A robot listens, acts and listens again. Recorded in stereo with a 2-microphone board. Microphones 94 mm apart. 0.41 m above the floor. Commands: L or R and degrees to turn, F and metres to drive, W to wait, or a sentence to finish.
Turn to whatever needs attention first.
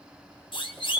L60
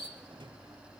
W
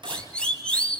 L10
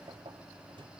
Found it: a siren, straight ahead.